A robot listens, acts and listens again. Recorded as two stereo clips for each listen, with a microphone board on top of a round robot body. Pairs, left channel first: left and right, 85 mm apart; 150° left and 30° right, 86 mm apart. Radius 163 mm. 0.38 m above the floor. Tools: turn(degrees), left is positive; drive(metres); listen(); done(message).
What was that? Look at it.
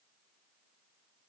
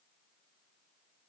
listen()
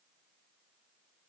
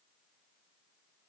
listen()
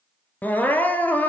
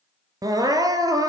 turn(degrees=20)
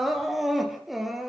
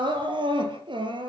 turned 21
done("Found it: crying, straight ahead, 2 to 4 m away.")